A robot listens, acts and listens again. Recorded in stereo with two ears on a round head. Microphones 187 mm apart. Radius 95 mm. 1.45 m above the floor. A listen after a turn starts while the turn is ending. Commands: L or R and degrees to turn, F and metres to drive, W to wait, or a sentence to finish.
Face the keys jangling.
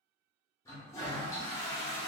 W
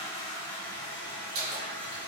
R75
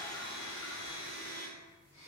W
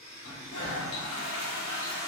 W
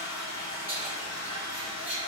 R10
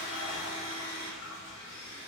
W
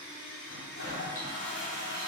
W
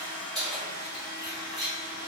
Found it: keys jangling, straight ahead, 1 to 2 m away.